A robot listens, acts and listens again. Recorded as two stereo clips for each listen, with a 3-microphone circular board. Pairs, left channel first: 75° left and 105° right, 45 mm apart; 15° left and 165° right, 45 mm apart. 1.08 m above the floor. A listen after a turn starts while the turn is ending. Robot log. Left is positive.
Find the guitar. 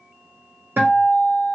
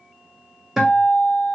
note: The guitar: 80° right.
cmd yaw -80
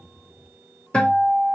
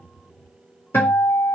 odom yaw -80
end: Facing the guitar.